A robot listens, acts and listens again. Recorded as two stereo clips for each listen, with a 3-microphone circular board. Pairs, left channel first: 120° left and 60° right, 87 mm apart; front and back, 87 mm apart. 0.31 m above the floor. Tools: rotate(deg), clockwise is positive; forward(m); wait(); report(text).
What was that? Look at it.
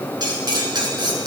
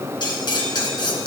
rotate(30)
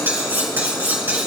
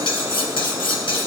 report("Facing the cutlery clinking.")